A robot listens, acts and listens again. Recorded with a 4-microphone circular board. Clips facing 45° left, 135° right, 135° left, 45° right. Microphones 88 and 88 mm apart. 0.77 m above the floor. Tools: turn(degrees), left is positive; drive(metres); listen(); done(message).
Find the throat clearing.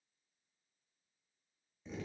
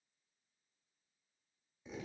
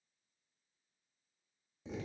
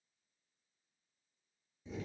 listen()
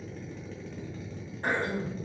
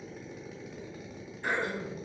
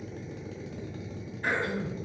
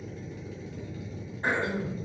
turn(degrees=10)
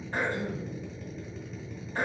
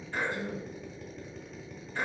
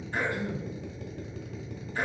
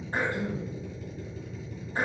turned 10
done("Facing the throat clearing, 1 to 2 m away.")